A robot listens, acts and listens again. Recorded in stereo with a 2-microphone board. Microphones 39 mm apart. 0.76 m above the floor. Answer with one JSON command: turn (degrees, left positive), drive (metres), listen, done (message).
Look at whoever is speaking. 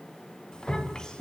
{"turn": 20}
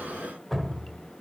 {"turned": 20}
{"listen": true}
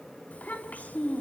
{"turn": 140}
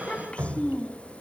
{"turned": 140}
{"turn": 35}
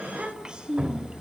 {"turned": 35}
{"turn": -20}
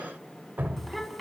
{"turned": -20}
{"done": "Facing the child speaking, over 4 m away."}